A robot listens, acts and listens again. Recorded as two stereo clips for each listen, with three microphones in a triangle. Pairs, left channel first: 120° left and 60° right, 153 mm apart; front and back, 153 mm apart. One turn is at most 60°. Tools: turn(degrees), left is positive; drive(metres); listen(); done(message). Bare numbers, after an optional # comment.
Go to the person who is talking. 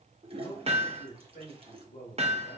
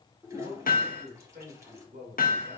# The man speaking: 155° left.
turn(60)
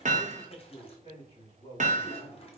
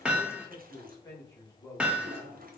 # The man speaking is now 75° left.
turn(60)
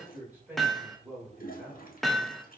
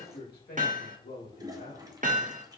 # The man speaking is now 20° left.
turn(20)
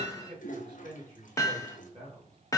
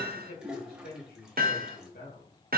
drive(1.0)
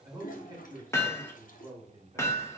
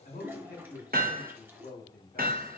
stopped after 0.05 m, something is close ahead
done("Something is in my way. I am facing the man speaking but have not reached it.")